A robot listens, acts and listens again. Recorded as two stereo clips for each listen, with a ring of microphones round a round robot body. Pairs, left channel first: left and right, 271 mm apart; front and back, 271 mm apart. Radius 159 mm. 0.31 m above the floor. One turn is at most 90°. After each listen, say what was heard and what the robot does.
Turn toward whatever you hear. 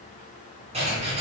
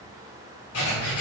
The writing: 25° right. Turn 25° right.
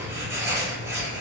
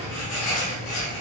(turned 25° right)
The writing is now 10° right. Turn 10° right.
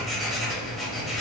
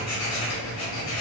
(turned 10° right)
Facing the writing, 1 to 2 m away.